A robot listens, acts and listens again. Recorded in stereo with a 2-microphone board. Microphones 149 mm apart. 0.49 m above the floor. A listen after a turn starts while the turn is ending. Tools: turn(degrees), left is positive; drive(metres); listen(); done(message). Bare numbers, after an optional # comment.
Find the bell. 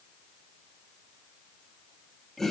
listen()
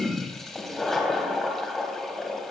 listen()
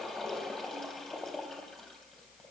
done("I can't make out a bell to turn to.")